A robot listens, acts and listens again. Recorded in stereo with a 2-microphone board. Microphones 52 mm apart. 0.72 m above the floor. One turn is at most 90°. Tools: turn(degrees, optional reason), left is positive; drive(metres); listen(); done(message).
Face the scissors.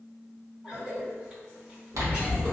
turn(degrees=-90)
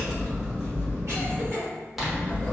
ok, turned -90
done("Facing the scissors.")